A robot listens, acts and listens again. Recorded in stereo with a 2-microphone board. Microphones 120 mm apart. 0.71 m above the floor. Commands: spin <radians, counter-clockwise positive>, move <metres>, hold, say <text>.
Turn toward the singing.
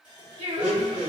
spin -0.79
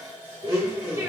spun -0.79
hold
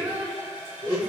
spin -0.52
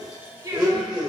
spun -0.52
spin -0.52
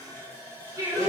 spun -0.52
spin -0.44
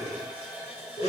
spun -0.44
hold
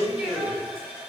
hold
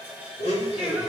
say Facing where the singing came from. I can't hear it now.